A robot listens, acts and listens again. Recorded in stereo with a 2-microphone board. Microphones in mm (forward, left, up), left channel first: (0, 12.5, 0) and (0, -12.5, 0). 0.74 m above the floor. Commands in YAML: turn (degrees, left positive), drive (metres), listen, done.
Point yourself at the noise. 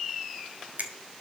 turn: -65
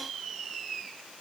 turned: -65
listen: true
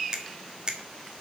turn: -35
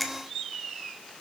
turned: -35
turn: 10
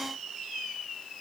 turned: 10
listen: true
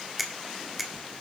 done: "Facing the finger snap, 1 to 2 m away."